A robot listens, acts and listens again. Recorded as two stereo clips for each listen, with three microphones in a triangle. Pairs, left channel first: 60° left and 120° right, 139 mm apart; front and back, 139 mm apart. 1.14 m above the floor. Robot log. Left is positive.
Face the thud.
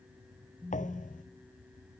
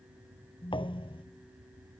note: The thud: 50° left.
cmd yaw +50
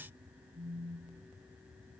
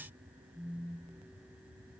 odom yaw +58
note: Nothing new. It was at 10° right.
cmd yaw -10
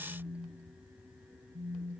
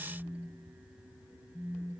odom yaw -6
end: Facing where the thud came from. I can't hear it now.